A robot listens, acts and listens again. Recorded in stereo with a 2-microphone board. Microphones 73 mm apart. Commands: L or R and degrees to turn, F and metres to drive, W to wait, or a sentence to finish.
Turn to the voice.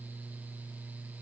W
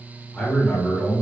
L30
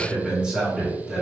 R15
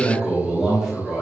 Facing the man speaking.